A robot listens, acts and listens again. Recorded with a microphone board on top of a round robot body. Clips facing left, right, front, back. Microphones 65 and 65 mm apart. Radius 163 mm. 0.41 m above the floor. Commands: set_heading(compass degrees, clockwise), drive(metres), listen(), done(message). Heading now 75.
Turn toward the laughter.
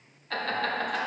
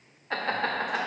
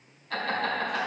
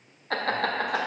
set_heading(235)
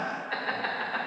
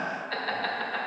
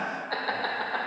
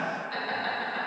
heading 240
done("Facing the laughter.")